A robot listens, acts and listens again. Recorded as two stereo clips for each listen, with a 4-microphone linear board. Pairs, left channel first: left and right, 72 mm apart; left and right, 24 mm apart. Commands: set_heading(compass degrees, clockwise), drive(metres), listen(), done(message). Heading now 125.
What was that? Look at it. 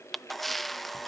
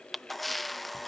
set_heading(95)
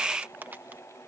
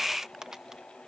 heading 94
set_heading(124)
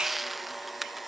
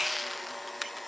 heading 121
done("Found it: a camera shutter, straight ahead.")